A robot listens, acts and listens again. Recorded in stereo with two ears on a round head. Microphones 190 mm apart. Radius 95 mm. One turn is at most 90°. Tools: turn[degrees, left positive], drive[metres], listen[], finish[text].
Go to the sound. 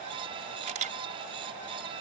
Thought: The camera shutter: about 40° right or 140° right.
Action: turn[-40]
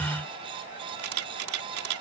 Thought: So it is at 100° right.
Action: turn[-90]
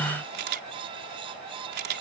Thought: The camera shutter is now 50° right.
Action: turn[-50]
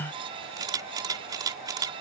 Thought: The camera shutter is now 20° right.
Action: turn[-20]
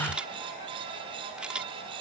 Action: drive[1.0]
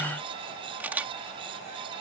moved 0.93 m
Thought: The camera shutter is now 10° right.
Action: turn[-10]
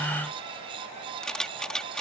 Action: drive[1.0]
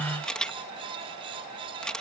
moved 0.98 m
Action: drive[1.0]
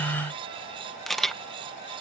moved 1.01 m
Action: drive[1.0]
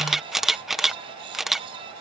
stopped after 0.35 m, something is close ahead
Action: finish[I am next to the camera shutter.]